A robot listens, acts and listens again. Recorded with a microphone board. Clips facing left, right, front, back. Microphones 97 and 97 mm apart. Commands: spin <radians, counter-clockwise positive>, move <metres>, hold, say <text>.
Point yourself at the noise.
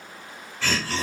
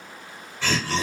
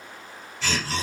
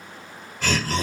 spin -2.79
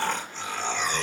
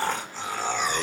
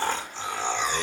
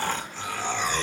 spin -0.70
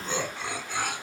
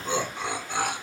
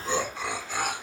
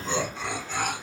spin -1.40
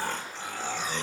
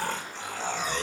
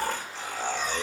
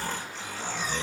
spin -0.52
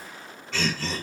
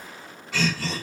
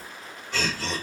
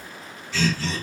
spin -0.17
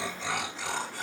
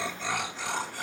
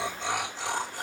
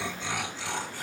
say Facing the laughter, 1 to 2 m away.